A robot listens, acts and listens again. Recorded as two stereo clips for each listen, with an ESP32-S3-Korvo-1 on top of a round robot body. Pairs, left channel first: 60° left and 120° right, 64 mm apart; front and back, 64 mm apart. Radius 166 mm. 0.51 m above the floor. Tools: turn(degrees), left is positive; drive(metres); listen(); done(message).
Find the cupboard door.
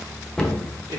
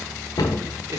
turn(degrees=-20)
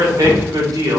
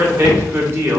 done("Found it: a cupboard door, straight ahead.")